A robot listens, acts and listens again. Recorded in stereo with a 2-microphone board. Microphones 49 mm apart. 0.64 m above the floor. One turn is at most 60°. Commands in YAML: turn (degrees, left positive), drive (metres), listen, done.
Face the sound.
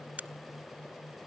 turn: -35
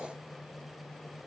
listen: true
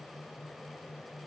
done: "I heard a crack, but can't make it out now. It was about straight ahead or 110° right."